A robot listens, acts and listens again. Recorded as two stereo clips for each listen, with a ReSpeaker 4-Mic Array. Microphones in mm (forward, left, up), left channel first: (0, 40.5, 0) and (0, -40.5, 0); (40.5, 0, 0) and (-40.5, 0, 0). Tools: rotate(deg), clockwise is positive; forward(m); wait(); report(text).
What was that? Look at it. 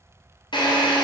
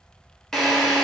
rotate(-85)
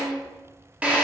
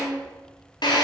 rotate(15)
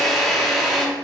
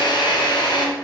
report("Facing the drill.")